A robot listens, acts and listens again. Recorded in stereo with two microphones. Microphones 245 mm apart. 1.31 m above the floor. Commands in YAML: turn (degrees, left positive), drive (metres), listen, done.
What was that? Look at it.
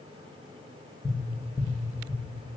turn: 30
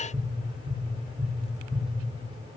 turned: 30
turn: -15
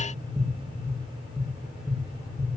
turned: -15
done: "Facing the tapping."